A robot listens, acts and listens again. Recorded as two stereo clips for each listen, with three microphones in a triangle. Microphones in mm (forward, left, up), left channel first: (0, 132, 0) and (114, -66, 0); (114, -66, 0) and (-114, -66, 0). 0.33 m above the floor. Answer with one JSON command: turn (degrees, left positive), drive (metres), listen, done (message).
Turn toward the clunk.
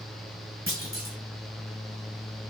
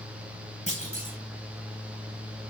{"turn": -55}
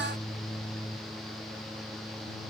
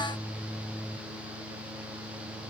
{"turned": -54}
{"done": "Facing where the clunk came from. I can't hear it now."}